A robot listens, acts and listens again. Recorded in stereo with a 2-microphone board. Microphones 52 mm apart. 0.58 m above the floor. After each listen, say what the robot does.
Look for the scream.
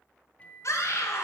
Turn 65° left.
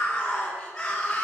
Turn 15° left.
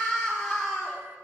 Facing the scream.